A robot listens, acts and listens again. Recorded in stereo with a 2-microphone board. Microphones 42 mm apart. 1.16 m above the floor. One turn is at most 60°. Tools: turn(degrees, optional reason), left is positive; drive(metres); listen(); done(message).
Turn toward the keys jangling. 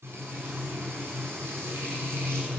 listen()
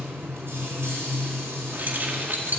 turn(degrees=-45, reason="The keys jangling: about 45° right or 135° right.")
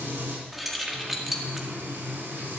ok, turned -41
done("Facing the keys jangling.")